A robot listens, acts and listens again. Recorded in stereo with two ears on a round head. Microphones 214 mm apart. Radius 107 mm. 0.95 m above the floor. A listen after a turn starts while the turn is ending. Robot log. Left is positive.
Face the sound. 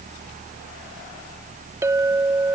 cmd yaw -30
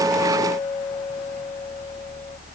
cmd idle
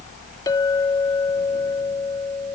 note: So it is at 15° left.
cmd yaw +15
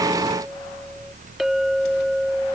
end: Facing the clink.